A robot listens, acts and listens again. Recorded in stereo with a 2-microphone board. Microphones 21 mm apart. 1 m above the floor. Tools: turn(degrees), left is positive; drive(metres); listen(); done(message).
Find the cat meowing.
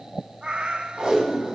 turn(degrees=-65)
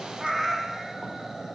turn(degrees=-25)
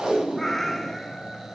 done("Facing the cat meowing.")